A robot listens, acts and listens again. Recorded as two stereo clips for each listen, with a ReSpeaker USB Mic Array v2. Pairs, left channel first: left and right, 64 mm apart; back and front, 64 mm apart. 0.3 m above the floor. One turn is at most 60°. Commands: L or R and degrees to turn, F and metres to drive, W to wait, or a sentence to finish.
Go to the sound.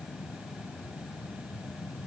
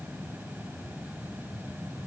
W
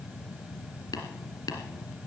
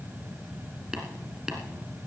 L60
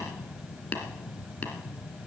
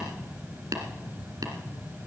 L20
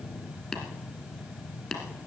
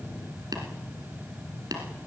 F1.0
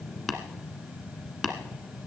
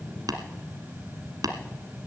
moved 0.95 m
F1.0
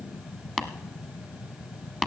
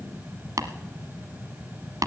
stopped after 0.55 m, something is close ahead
R10
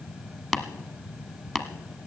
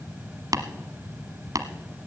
I am next to the tapping.